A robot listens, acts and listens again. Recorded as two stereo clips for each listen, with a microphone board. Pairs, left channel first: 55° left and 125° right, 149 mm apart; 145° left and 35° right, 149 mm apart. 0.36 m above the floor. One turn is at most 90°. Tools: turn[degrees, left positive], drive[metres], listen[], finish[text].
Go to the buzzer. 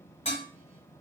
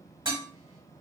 Action: listen[]
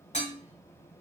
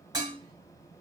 Action: listen[]
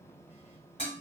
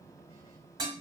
Action: finish[I can't make out a buzzer to turn to.]